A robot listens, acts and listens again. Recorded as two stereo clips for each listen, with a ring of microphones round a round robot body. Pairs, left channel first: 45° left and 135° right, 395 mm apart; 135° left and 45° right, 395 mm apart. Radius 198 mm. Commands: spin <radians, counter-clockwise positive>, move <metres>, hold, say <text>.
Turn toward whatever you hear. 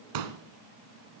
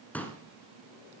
spin -2.44
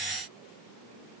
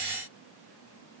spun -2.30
say Facing where the pop came from. I can't hear it now.